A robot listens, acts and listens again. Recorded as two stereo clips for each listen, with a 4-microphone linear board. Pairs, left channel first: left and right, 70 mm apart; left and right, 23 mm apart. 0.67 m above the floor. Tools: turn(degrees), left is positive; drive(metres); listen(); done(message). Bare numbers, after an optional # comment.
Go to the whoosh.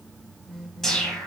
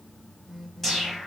turn(30)
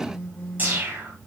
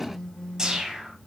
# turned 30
# So it is at 25° right.
turn(-25)
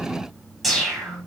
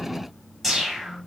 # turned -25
drive(1.0)
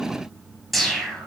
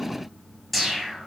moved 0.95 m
drive(1.0)
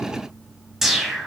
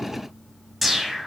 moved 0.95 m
drive(1.0)
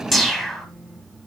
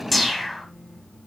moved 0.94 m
drive(1.0)
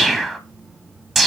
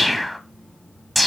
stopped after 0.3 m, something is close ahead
done("I am next to the whoosh.")